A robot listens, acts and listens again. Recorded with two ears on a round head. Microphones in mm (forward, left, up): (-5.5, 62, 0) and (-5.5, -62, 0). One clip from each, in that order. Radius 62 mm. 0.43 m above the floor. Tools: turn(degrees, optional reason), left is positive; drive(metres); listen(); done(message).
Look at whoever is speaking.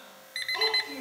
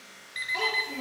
turn(degrees=30)
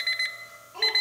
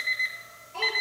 turn(degrees=-20, reason="So it is at 20° right.")
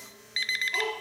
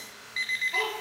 done("Found it: a child speaking, straight ahead.")